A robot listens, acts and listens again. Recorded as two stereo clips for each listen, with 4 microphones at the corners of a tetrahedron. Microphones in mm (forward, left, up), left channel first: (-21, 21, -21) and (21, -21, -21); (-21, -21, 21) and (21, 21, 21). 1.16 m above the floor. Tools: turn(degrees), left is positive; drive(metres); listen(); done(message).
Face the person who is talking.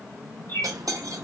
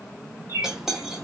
listen()
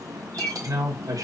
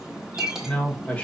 turn(degrees=-70)
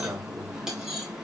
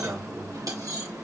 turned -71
listen()
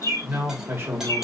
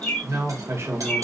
done("Found it: a man speaking, straight ahead.")